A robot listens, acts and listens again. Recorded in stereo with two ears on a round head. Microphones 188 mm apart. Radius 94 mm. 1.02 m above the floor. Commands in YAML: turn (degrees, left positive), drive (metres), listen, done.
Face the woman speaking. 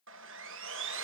listen: true
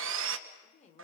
turn: 35
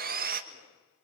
listen: true
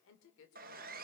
turn: 115
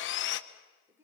turn: -10
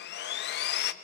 listen: true
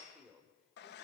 done: "Facing the woman speaking, 2 to 4 m away."